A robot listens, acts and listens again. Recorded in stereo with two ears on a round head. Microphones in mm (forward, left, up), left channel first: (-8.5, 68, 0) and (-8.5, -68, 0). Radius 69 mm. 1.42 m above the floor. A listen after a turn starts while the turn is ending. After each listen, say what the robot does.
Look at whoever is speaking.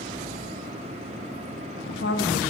Turn 90° left.
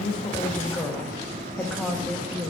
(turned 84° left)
Turn 10° left.
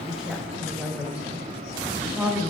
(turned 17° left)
Facing the woman speaking, 1 to 2 m away.